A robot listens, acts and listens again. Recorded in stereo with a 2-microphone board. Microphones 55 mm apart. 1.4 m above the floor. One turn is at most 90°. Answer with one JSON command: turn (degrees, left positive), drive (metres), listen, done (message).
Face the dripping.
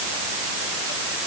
{"listen": true}
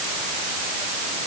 {"listen": true}
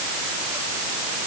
{"done": "I can't make out dripping to turn to."}